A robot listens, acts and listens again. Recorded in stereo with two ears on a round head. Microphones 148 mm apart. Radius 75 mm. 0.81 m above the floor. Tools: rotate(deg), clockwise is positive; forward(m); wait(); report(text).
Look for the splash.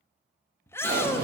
rotate(55)
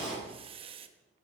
report("Found it: a splash, straight ahead, 2 to 4 m away.")